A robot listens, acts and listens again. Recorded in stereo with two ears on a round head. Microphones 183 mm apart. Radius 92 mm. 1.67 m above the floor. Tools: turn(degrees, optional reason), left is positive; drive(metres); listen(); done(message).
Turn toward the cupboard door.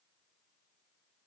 listen()
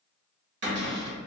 turn(degrees=-55, reason="The cupboard door: about 55° right or 125° right.")
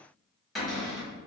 done("Found it: a cupboard door, straight ahead, 1 to 2 m away.")